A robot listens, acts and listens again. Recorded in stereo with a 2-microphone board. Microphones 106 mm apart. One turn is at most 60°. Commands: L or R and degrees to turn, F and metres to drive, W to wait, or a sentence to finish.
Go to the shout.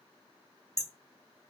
W
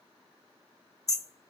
W
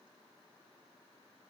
I can't make out a shout to turn to.